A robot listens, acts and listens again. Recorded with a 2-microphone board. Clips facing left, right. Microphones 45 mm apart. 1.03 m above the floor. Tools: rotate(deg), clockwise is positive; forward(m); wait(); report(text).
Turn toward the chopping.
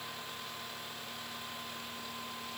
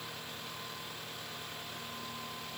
wait()
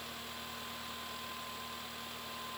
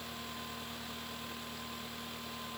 wait()
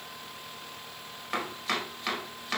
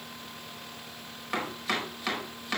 rotate(-30)
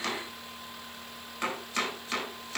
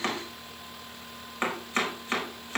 rotate(30)
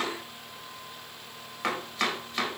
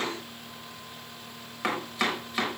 report("Facing the chopping, over 4 m away.")